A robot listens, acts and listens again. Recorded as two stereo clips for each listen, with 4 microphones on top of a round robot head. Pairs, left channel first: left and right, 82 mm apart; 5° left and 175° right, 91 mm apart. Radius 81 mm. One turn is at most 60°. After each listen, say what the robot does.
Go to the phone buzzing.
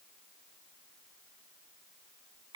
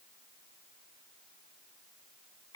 Keep listening.
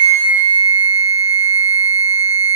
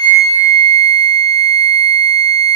Keep listening.
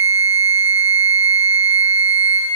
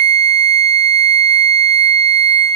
I can't make out a phone buzzing, only a flute.